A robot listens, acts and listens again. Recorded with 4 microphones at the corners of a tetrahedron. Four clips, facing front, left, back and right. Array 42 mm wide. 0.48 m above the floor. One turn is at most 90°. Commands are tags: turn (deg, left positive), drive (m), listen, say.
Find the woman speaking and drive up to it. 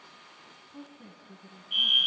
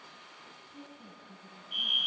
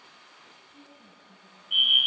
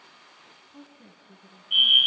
<turn deg="-45"/>
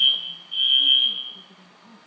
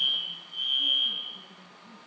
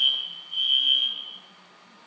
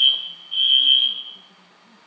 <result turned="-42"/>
<listen/>
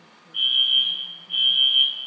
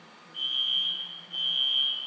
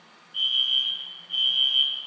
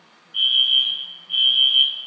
<listen/>
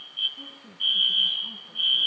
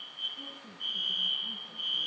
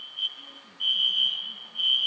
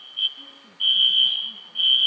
<say>Facing where the woman speaking came from. I can't hear it now. I did not reach it.</say>